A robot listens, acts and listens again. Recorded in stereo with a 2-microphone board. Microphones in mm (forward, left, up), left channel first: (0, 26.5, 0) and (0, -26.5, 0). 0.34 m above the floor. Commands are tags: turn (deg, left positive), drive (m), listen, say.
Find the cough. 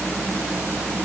<listen/>
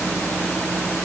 <listen/>
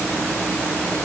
<say>I can't make out a cough.</say>